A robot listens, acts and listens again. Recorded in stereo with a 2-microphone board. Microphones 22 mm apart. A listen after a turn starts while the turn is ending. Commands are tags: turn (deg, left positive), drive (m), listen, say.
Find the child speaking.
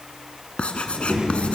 <turn deg="-60"/>
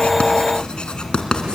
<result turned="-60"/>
<turn deg="-65"/>
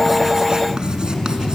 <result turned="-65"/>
<turn deg="30"/>
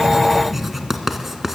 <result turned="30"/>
<say>Facing the child speaking.</say>